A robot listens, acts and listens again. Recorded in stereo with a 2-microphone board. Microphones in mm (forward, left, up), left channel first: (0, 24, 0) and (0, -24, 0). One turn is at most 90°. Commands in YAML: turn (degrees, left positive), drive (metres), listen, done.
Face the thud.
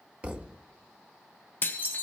turn: -20
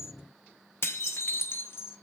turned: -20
listen: true
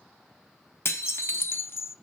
done: "I heard a thud, but can't make it out now. It was about straight ahead or 140° right."